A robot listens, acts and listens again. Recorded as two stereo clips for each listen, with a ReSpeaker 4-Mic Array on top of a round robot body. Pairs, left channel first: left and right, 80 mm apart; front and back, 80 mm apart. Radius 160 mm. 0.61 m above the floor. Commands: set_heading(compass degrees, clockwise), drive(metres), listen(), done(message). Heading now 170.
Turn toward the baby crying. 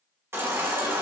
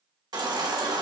set_heading(320)
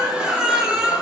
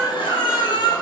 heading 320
set_heading(335)
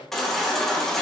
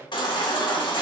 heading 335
done("Found it: a baby crying, straight ahead.")